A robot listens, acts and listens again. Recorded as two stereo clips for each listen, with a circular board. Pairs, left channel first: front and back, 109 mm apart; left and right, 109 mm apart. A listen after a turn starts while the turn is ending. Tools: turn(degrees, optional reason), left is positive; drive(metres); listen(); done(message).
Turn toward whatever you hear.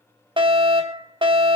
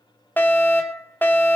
turn(degrees=160, reason="The fire alarm: 160° left.")
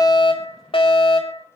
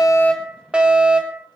turn(degrees=-10, reason="The fire alarm is now 10° right.")
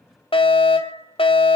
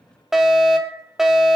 done("Facing the fire alarm.")